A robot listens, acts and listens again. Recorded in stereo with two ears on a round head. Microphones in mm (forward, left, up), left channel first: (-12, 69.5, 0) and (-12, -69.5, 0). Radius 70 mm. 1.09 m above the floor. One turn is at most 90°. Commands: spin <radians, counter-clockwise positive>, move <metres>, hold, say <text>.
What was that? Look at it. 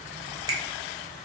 spin -0.35
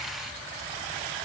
hold
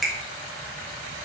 say Found it: a finger snap, straight ahead, under 1 m away.